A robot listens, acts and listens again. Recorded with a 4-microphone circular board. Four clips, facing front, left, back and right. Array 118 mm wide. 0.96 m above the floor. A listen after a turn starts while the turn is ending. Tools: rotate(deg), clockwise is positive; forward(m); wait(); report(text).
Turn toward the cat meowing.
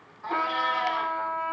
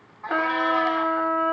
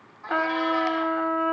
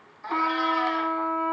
rotate(-90)
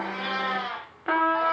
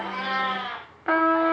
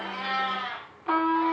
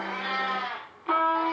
rotate(-30)
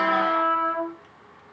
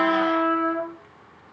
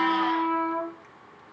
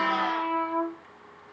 wait()
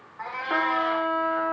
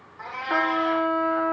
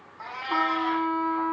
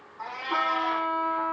rotate(-15)
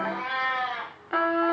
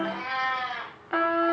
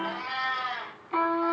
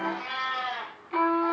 report("Facing the cat meowing.")